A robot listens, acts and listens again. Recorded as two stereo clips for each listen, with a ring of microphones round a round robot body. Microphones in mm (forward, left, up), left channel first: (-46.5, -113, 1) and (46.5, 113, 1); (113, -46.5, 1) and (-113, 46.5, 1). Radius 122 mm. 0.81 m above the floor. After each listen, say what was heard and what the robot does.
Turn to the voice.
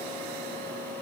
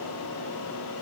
Keep listening.
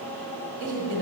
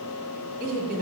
The woman speaking: 100° left. Turn 100° left.
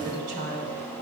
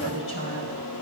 The woman speaking is now 20° left. Turn 20° left.
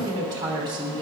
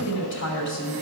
Facing the woman speaking, 2 to 4 m away.